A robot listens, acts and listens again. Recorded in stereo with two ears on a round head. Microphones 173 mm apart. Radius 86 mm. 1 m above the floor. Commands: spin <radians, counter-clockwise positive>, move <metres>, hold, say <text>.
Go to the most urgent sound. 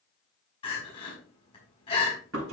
spin 0.52
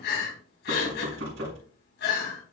spin 2.09
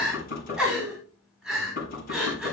move 1.0
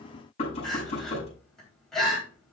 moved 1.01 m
move 1.0
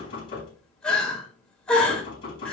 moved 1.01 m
move 1.0
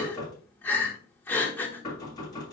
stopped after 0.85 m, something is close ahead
spin 0.26
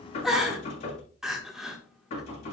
say Arrived at the crying, straight ahead.